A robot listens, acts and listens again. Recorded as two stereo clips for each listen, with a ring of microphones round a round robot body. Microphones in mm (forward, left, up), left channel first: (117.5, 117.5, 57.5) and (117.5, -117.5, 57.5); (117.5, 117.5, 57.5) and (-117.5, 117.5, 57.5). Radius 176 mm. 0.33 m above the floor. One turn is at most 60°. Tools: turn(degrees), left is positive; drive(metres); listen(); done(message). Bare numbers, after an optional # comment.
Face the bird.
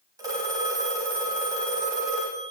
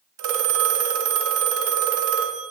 listen()
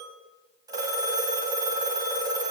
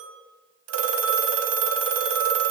listen()
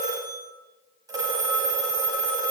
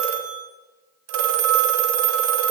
done("I can't make out a bird to turn to.")